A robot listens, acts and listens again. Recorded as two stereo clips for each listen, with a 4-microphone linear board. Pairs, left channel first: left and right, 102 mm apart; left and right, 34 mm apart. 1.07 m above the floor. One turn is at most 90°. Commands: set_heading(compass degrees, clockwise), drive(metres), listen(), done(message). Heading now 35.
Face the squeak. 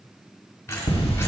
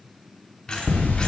set_heading(10)
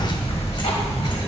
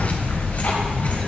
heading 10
listen()
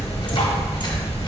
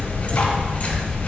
listen()
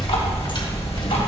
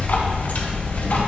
done("I heard a squeak, but can't make it out now. It was about straight ahead or 130° left.")